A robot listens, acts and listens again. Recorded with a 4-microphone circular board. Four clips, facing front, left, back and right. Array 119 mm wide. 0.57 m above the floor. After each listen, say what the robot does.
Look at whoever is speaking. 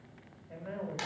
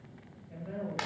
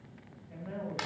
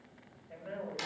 Turn 30° right.
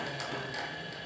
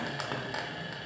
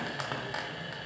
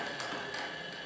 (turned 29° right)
Keep listening.
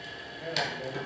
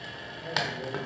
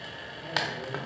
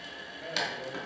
Facing the man speaking, 2 to 4 m away.